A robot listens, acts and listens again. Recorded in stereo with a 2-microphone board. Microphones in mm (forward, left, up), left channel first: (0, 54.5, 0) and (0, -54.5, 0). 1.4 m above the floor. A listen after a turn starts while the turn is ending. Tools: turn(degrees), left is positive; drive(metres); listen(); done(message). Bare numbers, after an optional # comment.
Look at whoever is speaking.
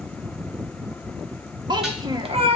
# The child speaking: about 40° right or 140° right.
turn(-40)
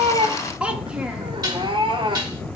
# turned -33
# So it is at 10° right.
turn(-10)
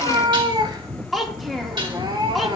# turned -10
done("Facing the child speaking, 1 to 2 m away.")